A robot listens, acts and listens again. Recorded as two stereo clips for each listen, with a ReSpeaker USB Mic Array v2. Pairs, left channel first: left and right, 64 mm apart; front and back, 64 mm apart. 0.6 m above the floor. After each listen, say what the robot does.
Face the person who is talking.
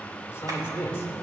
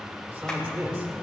Turn 135° left.
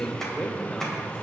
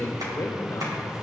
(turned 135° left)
Turn 25° left.
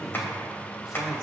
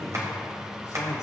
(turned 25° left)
Keep listening.
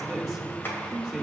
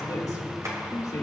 Found it: a man speaking, straight ahead, 2 to 4 m away.